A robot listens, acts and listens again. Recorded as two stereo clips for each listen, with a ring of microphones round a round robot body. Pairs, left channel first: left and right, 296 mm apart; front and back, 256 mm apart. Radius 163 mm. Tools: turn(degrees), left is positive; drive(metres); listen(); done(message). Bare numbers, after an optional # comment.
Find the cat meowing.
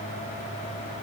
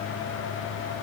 listen()
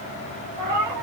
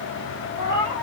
# The cat meowing: 60° right.
turn(-60)
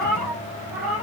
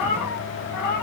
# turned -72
done("Found it: a cat meowing, straight ahead.")